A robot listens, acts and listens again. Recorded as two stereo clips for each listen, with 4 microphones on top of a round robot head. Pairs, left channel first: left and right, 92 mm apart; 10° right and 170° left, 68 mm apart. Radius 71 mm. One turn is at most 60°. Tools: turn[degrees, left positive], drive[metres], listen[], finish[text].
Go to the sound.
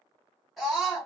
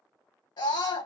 Action: drive[1.0]
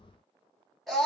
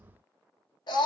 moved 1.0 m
Action: drive[1.0]
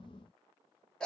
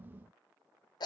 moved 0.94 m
Action: drive[1.0]
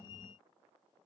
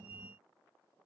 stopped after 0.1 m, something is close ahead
Action: listen[]
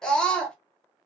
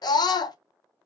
Action: finish[I am next to the scream.]